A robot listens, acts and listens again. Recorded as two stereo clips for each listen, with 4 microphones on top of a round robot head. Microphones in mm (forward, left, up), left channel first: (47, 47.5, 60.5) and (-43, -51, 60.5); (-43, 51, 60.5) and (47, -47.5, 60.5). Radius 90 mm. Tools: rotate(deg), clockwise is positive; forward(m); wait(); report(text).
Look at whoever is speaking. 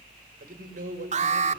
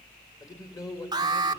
rotate(160)
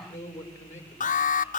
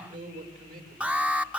rotate(20)
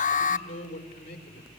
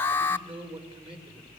report("Facing the man speaking.")